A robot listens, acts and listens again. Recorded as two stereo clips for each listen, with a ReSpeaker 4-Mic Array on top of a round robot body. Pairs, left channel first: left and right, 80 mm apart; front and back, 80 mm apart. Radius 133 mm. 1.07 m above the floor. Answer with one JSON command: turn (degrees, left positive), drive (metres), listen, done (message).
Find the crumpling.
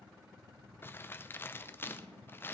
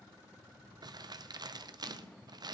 {"turn": 150}
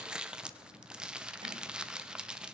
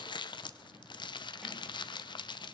{"turn": -10}
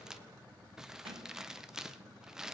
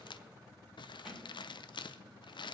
{"done": "Facing the crumpling."}